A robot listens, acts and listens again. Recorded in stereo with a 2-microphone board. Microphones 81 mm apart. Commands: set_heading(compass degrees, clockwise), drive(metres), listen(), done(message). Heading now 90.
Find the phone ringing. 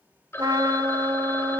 set_heading(60)
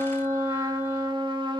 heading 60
listen()
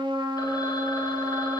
listen()
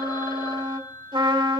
set_heading(300)
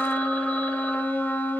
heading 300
listen()
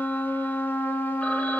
listen()
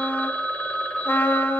set_heading(285)
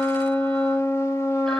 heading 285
listen()
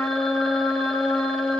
listen()
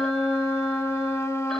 done("I heard a phone ringing from this way, but can't make it out now.")